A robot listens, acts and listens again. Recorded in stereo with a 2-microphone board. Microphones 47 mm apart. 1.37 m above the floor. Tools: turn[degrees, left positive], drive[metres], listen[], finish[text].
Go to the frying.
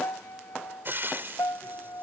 Thought: The frying: about 50° right or 130° right.
Action: turn[-50]
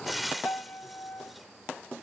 Action: drive[1.0]
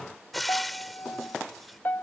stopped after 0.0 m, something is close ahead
Action: finish[Blocked. The frying is further on, straight ahead.]